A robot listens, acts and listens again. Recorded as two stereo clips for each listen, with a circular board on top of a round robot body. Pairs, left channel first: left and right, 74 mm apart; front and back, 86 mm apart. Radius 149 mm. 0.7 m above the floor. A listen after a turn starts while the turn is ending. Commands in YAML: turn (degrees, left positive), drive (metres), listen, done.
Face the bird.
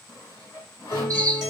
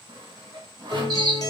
turn: -140
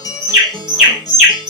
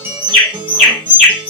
turn: -10
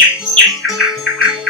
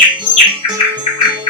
done: "Facing the bird, under 1 m away."